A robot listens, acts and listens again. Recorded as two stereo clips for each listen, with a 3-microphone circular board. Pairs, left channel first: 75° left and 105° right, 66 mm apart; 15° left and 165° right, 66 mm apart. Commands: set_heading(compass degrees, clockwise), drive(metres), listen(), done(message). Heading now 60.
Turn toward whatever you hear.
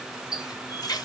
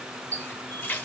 set_heading(345)
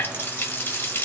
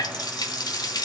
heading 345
set_heading(330)
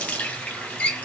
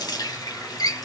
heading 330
done("Found it: a running tap, straight ahead, 1 to 2 m away.")